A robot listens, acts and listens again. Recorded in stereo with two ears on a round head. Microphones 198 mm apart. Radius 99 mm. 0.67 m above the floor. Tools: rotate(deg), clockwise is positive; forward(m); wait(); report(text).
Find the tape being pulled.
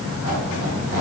wait()
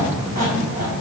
wait()
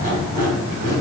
report("I can't make out tape being pulled to turn to.")